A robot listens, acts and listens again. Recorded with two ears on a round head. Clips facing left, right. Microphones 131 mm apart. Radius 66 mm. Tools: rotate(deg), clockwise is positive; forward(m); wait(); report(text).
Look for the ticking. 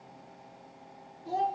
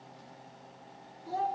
wait()
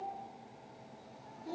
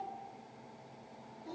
wait()
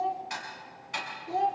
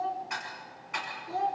rotate(-40)
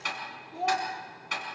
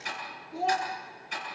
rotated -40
rotate(-100)
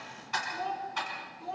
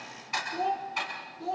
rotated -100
rotate(10)
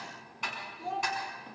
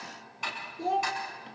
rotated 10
report("Facing the ticking, over 4 m away.")